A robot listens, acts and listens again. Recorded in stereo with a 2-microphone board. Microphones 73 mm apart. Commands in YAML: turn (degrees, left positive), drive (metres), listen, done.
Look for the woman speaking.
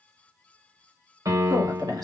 turn: -65
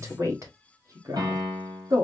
turn: -55
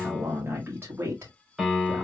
turn: -35
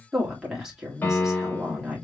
done: "Found it: a woman speaking, straight ahead, 2 to 4 m away."